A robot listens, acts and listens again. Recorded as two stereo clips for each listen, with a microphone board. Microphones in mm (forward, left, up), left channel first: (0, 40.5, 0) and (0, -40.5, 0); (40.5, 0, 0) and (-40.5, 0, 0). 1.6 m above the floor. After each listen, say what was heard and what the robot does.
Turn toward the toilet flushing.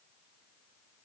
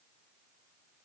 Keep listening.
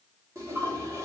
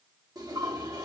The toilet flushing: 140° right. Turn 140° right.
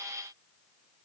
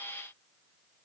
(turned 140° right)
Keep listening.
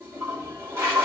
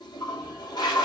The toilet flushing is now 30° right. Turn 30° right.
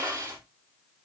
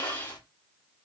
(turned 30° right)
The toilet flushing is now 25° right. Turn 25° right.
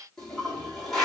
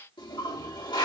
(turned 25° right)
Found it: a toilet flushing, straight ahead, 2 to 4 m away.